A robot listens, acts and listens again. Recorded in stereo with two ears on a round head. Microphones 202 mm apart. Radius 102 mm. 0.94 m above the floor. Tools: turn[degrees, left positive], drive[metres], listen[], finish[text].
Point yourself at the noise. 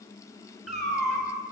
Action: turn[30]
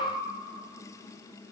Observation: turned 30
Action: listen[]
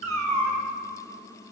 Thought: So it is at 30° right.
Action: turn[-30]
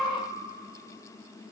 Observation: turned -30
Action: finish[Found it: a cat meowing, straight ahead.]